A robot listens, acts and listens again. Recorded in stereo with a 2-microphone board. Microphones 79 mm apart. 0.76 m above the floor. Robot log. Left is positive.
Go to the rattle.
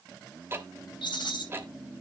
cmd yaw +90
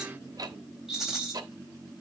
cmd fwd 1.0
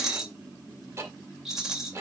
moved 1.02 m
cmd fwd 1.0
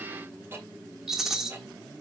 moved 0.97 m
cmd fwd 1.0
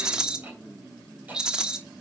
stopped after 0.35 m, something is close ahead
note: The rattle is now 10° right.
cmd yaw -10
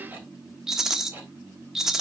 end: I am next to the rattle.